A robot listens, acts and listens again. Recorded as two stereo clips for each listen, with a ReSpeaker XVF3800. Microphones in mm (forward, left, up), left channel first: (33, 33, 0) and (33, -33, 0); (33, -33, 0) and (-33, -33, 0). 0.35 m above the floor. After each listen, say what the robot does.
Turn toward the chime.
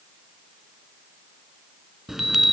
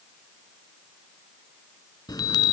Facing the chime.